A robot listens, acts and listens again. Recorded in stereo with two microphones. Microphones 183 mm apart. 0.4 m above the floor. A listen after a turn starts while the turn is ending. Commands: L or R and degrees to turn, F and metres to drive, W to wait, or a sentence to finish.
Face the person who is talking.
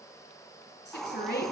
L70
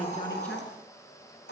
W
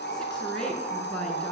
Found it: a woman speaking, straight ahead.